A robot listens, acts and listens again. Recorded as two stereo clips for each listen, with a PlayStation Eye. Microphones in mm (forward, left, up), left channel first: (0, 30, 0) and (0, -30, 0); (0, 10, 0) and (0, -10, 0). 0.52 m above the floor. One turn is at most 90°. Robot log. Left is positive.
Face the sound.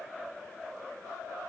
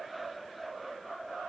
cmd idle
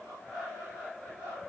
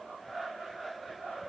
cmd idle
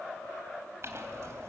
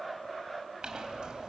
note: The clink: about 50° right or 130° right.
cmd yaw -50
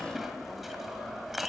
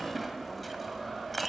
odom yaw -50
end: Found it: a clink, straight ahead, 2 to 4 m away.